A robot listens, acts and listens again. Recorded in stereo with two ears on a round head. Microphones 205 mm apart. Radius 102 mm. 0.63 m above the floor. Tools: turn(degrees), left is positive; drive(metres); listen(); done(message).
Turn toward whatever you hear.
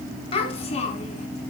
turn(degrees=30)
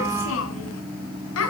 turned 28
turn(degrees=100)
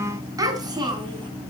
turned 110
turn(degrees=-20)
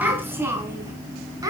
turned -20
turn(degrees=-15)
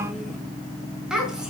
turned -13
done("Found it: a child speaking, straight ahead.")